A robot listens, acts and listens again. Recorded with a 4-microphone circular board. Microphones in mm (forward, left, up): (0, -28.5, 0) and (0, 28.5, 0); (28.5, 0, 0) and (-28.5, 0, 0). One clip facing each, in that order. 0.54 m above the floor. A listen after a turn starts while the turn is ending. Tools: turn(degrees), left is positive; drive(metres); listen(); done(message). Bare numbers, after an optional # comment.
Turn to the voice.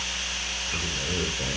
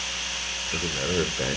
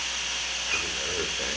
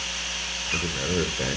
# The man speaking: 110° left.
turn(110)
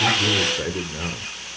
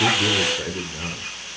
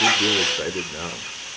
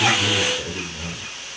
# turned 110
# The man speaking is now 20° right.
turn(-20)
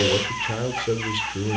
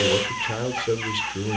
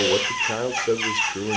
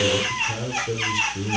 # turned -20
done("Facing the man speaking, 1 to 2 m away.")